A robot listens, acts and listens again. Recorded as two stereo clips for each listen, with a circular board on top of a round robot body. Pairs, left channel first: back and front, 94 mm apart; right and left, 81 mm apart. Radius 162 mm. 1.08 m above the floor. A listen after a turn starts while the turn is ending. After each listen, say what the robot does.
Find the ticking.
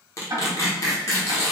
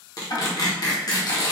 Turn 50° right.
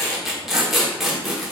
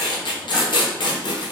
Keep listening.
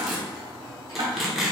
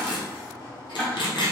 Turn 15° right.
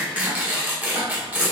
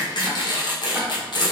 Keep listening.
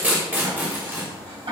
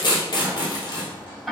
Found it: ticking, straight ahead, 1 to 2 m away.